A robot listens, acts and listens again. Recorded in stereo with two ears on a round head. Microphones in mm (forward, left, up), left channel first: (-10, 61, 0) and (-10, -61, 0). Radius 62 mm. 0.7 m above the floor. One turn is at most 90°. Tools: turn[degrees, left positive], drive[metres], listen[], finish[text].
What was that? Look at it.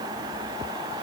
Action: listen[]
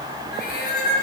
Thought: The cat meowing: about 65° left or 115° left.
Action: turn[65]
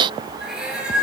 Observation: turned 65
Action: finish[Facing the cat meowing.]